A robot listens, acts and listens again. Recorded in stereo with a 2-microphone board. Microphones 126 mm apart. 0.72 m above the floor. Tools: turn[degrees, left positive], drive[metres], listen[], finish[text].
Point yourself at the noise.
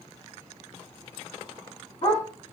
Thought: The dog barking: about 60° left or 120° left.
Action: turn[60]
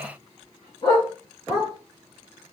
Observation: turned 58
Thought: So it is at 35° left.
Action: turn[35]
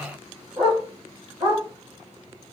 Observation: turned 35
Thought: The dog barking is now 15° right.
Action: turn[-15]
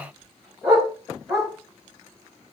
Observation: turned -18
Action: finish[Facing the dog barking.]